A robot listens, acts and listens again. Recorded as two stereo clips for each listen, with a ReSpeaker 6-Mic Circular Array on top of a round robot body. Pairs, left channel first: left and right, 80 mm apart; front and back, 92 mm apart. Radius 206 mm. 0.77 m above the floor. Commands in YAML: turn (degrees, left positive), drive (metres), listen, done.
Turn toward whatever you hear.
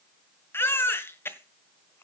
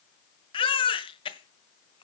turn: 25
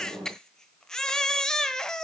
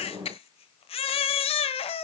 turn: 10
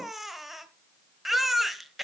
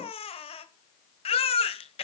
done: "Facing the baby crying."